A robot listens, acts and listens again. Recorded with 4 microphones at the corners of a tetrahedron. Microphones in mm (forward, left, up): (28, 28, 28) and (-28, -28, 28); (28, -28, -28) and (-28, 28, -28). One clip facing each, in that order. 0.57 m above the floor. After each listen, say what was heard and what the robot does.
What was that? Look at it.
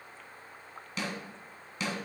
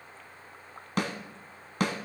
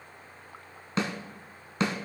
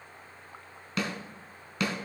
The snare drum: 105° right. Turn 105° right.
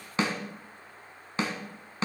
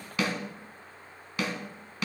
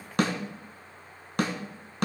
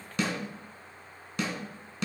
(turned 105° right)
The snare drum is now 15° right. Turn 15° right.
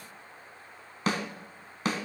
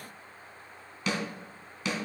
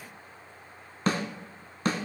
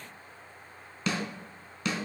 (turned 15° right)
Facing the snare drum.